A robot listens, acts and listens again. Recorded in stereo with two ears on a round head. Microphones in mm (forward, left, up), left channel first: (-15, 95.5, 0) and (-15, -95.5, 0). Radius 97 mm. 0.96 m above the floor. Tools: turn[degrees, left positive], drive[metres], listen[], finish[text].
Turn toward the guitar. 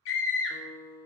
Thought: The guitar: about 30° left or 150° left.
Action: turn[30]
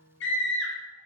Thought: So it is at 115° left.
Action: turn[115]
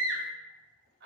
Action: listen[]
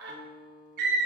Thought: The guitar is now 10° right.
Action: turn[-10]
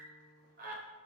Action: finish[Found it: a guitar, straight ahead, under 1 m away.]